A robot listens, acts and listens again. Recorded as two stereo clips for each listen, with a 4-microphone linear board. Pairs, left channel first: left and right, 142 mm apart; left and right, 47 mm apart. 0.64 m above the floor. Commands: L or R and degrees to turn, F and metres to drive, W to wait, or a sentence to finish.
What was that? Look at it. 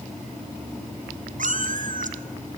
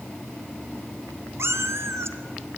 R65
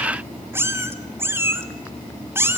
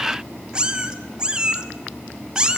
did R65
R15
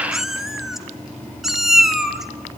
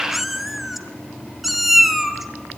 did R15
Facing the cat meowing, 1 to 2 m away.